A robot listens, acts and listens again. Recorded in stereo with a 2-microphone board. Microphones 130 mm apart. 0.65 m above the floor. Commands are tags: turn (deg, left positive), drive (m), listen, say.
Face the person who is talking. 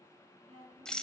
<turn deg="-70"/>
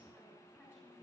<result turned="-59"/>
<listen/>
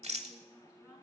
<listen/>
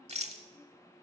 <say>I heard a woman speaking, but can't make it out now. It was about 10° right or 55° right.</say>